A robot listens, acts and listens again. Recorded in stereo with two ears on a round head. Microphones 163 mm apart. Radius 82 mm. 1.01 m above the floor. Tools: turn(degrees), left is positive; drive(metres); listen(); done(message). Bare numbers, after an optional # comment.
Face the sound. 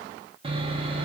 # The sawing: about 30° right or 150° right.
turn(-30)
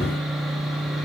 done("Facing the sawing, 1 to 2 m away.")